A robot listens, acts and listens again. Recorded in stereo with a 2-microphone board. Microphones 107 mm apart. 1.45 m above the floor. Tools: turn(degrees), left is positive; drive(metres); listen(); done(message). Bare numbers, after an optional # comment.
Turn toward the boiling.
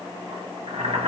# The boiling: about 70° right or 110° right.
turn(-70)
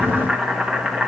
done("Facing the boiling, 1 to 2 m away.")